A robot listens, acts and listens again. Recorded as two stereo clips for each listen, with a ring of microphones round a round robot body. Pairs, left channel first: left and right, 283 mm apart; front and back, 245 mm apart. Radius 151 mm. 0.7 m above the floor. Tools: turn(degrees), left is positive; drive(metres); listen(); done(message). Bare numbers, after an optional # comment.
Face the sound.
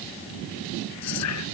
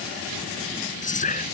# The whispering: 60° left.
turn(60)
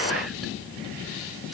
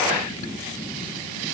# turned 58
listen()
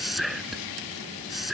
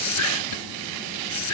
done("Found it: whispering, straight ahead.")